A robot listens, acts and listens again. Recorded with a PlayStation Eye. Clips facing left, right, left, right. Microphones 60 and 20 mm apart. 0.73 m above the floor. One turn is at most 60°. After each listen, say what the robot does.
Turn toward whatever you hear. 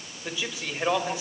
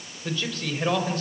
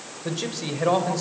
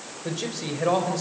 Turn 30° left.
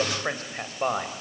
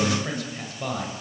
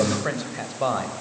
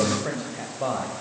Turn 60° left.
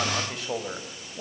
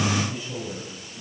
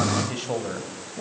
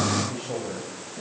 Turn 60° left.
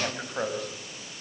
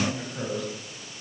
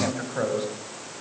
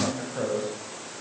Turn 45° left.
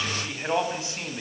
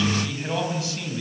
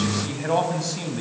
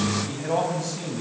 Turn 25° left.
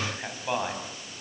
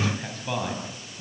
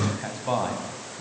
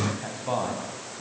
Turn 15° left.
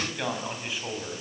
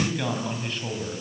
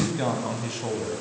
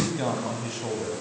Found it: a man speaking, straight ahead.